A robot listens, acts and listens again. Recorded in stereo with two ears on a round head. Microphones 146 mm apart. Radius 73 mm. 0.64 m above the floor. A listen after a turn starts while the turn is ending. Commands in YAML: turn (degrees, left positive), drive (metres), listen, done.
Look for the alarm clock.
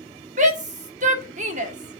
listen: true
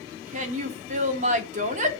listen: true
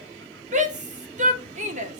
done: "I can't make out an alarm clock to turn to."